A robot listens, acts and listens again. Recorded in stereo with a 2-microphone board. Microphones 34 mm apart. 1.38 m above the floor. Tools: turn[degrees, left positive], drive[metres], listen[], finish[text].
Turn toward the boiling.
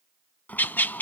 Thought: The boiling: about 55° left or 125° left.
Action: turn[55]
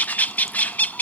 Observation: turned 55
Action: listen[]
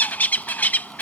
Action: listen[]
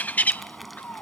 Action: finish[Facing the boiling.]